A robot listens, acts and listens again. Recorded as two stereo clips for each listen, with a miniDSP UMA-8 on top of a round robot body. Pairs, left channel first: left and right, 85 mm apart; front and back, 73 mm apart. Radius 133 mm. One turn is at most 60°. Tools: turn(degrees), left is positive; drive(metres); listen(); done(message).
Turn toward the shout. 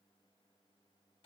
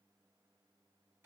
listen()
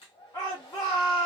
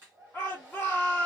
turn(degrees=55)
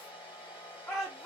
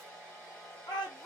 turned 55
done("Facing the shout.")